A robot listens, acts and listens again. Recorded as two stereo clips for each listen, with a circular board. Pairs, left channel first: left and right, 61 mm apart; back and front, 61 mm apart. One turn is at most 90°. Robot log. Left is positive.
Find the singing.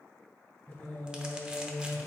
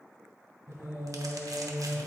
note: The singing: 50° left.
cmd yaw +50
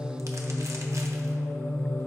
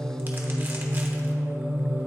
note: The singing is now 45° left.
cmd yaw +45
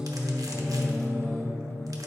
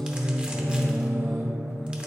note: The singing is now 40° left.
cmd yaw +40
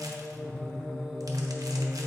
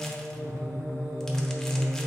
note: The singing is now 15° left.
cmd yaw +15
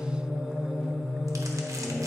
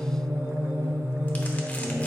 end: Found it: singing, straight ahead.